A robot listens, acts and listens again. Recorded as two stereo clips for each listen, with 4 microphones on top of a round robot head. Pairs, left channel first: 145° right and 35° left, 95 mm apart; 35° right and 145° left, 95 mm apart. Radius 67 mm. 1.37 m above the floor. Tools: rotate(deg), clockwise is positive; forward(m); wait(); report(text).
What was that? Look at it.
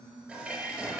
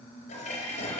rotate(40)
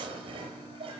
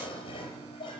report("Facing the dishes clattering, over 4 m away.")